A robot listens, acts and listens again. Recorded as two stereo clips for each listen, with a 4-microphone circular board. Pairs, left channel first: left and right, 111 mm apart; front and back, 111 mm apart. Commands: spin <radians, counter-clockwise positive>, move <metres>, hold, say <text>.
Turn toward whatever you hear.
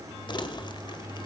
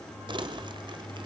spin 2.36
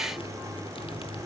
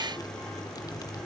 spin 0.96
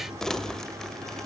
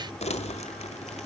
say Facing the crumpling.